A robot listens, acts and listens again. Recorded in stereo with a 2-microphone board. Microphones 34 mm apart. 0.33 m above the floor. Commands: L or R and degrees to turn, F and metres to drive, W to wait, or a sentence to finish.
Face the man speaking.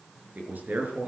R70
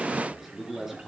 R10
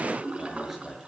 R10
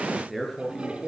Facing the man speaking, over 4 m away.